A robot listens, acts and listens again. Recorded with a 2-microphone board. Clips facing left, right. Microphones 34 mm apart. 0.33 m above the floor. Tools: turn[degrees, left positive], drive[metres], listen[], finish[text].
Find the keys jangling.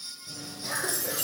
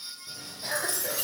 Thought: The keys jangling: about 25° right or 155° right.
Action: turn[-25]
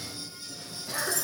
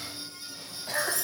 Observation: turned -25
Thought: The keys jangling: about 25° right or 155° right.
Action: turn[-25]
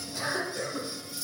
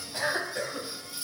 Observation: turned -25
Thought: The keys jangling: about 35° right or 145° right.
Action: turn[-35]
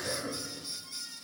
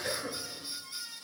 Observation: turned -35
Action: listen[]
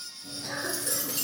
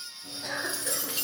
Thought: The keys jangling: about 35° right or 145° right.
Action: turn[-35]
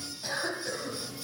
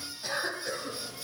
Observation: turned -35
Action: finish[Facing the keys jangling, 2 to 4 m away.]